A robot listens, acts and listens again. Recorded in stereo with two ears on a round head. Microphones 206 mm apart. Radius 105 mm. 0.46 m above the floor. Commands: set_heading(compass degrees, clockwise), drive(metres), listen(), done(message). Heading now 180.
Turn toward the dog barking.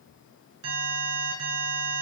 listen()
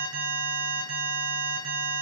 listen()
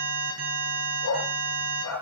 set_heading(90)
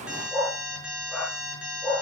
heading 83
done("Facing the dog barking.")